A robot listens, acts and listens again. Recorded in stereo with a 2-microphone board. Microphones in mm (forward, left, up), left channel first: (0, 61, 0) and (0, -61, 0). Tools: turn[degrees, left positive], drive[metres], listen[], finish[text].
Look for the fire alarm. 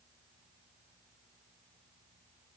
Action: listen[]
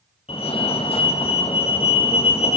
Thought: The fire alarm: about 55° left or 125° left.
Action: turn[55]
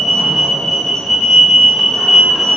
Action: finish[Facing the fire alarm, 2 to 4 m away.]